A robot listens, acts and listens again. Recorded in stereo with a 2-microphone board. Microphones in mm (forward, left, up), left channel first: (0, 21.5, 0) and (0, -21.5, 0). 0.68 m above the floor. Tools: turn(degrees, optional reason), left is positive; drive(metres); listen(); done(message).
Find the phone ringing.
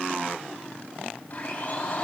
listen()
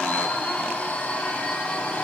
listen()
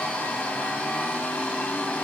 done("I can't make out a phone ringing, only a blender.")